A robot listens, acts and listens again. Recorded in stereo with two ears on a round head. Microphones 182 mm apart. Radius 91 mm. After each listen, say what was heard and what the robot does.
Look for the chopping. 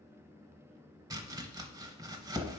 The chopping: about 20° right or 160° right. Turn 20° right.
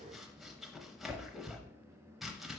Facing the chopping.